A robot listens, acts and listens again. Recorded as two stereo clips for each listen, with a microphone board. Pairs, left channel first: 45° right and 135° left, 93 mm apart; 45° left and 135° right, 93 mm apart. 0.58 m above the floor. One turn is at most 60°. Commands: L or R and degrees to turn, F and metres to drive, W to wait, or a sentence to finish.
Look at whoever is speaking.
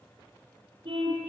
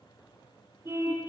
W
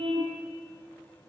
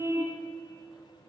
W
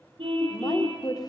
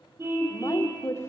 R15
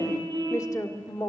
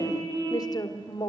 Facing the woman speaking.